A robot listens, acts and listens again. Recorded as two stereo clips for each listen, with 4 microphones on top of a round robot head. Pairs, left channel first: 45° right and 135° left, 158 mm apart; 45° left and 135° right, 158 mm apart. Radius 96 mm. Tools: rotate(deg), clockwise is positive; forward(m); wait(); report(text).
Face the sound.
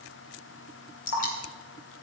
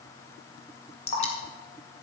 report("Found it: dripping, straight ahead, 2 to 4 m away.")